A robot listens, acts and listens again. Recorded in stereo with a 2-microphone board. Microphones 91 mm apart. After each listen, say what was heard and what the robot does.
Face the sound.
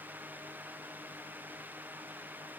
Keep listening.
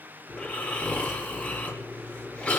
Turn 30° left.
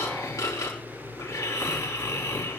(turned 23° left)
So it is at 145° left. Turn 145° left.
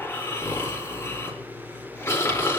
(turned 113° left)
The snoring is now 30° left. Turn 30° left.
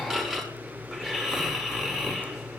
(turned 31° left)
Found it: snoring, straight ahead.